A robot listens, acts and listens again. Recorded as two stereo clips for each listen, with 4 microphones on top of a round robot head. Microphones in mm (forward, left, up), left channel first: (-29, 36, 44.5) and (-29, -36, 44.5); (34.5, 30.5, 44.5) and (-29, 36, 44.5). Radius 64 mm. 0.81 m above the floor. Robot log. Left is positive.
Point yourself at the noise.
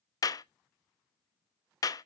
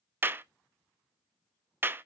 note: The clap: 120° left.
cmd yaw +120
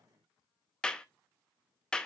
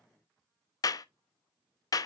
note: The clap is now 10° left.
cmd yaw +10
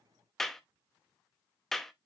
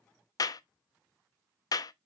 end: Found it: a clap, straight ahead, under 1 m away.